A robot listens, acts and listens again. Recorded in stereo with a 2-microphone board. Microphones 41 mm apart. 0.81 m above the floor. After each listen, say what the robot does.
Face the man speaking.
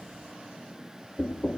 Keep listening.
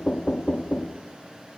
Keep listening.
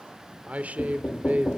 Turn 35° right.
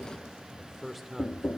Facing the man speaking, 2 to 4 m away.